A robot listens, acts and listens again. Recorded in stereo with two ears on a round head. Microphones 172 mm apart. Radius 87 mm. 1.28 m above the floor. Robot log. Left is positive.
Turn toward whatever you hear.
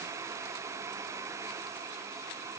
cmd idle
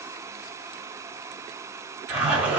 cmd yaw -30
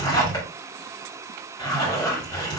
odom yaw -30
note: So it is at 25° left.
cmd yaw +25
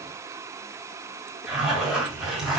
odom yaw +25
end: Found it: a zipper, straight ahead.